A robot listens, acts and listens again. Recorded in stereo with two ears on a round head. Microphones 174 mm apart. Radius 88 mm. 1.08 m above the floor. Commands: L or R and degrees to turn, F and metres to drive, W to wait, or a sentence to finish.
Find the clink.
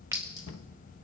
L20
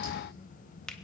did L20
W
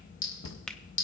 L140
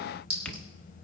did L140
R30
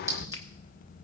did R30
R15
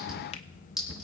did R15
Facing the clink, over 4 m away.